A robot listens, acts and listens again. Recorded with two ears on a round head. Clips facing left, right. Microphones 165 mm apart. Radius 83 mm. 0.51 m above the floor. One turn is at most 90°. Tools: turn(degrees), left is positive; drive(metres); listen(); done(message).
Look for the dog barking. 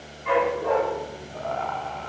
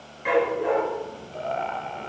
turn(degrees=-90)
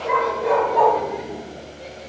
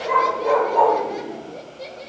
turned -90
done("Found it: a dog barking, straight ahead.")